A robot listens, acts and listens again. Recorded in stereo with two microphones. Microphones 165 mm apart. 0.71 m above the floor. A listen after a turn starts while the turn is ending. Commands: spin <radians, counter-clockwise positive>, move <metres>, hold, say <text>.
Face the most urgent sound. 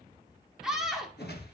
spin -0.52
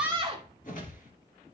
spin -2.53
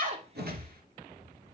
hold
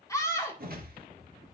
spin 0.35
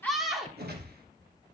say Facing the scream, 2 to 4 m away.